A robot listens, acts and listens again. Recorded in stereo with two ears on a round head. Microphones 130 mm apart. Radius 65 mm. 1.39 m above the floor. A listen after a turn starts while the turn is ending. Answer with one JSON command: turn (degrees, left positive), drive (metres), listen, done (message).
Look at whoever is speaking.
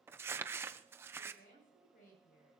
{"turn": 65}
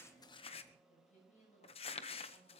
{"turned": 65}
{"turn": 50}
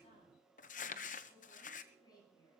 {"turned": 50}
{"turn": 30}
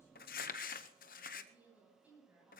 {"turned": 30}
{"turn": -10}
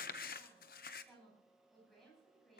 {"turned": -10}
{"done": "Found it: a woman speaking, straight ahead, over 4 m away."}